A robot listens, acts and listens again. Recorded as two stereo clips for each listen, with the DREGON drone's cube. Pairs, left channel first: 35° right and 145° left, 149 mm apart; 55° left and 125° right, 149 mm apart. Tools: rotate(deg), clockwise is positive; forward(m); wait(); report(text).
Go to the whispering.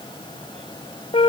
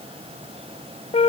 wait()
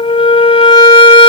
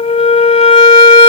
wait()
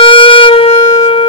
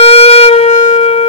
report("I can't make out whispering, only a flute.")